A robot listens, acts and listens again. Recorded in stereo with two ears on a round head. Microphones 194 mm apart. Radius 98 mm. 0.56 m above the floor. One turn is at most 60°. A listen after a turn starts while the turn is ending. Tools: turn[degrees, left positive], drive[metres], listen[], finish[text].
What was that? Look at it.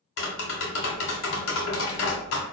Thought: The tapping: about 60° left or 120° left.
Action: turn[60]
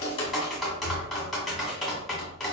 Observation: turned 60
Action: finish[Facing the tapping.]